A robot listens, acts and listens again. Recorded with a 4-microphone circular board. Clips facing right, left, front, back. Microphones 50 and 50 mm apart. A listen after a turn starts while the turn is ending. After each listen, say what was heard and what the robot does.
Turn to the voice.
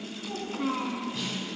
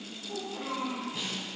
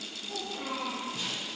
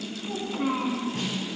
The child speaking: 130° right. Turn 130° right.
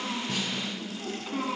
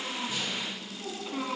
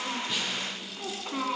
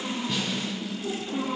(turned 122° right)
The child speaking is now 10° right. Turn 10° right.
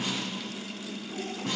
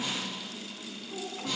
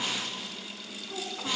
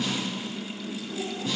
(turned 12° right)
Keep listening.
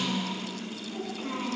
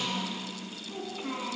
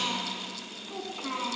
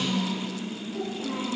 Found it: a child speaking, straight ahead.